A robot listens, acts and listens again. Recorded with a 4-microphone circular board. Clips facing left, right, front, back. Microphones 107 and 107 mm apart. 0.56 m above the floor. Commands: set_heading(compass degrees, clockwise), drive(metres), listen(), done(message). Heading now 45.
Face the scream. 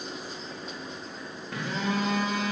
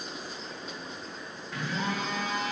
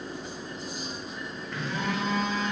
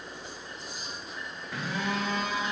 listen()
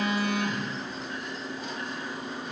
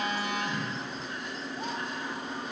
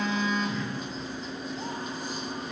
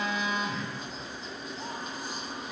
listen()
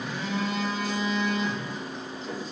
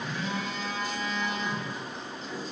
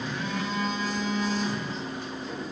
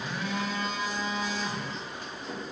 done("I can't make out a scream, only a phone buzzing.")